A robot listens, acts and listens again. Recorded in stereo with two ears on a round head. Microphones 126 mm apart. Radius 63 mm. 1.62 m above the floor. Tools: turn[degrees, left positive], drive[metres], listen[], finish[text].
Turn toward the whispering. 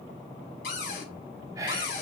Thought: The whispering: about 25° right or 155° right.
Action: turn[-25]
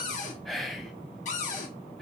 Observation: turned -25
Action: finish[Found it: whispering, straight ahead.]